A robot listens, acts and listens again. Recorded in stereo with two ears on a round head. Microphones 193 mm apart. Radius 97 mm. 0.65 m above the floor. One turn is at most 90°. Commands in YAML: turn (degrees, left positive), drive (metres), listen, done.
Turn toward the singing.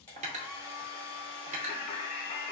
turn: 25
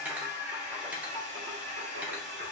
turn: -45
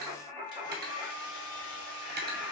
turn: -35
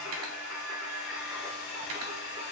turn: -10
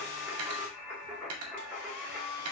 done: "Facing the singing."